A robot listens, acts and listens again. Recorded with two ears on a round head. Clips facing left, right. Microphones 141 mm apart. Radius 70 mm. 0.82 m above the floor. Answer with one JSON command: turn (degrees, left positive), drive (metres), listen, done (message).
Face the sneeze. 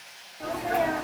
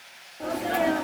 {"turn": -35}
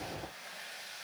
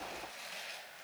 {"listen": true}
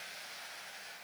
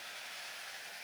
{"done": "I heard a sneeze, but can't make it out now. It was about straight ahead or 110° right."}